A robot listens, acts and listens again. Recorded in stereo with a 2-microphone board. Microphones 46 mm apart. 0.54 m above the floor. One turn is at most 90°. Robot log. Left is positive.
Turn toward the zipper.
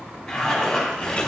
cmd yaw +30
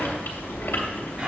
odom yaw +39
note: So it is at 35° right.
cmd yaw -35
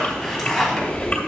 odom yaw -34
end: Facing the zipper, 2 to 4 m away.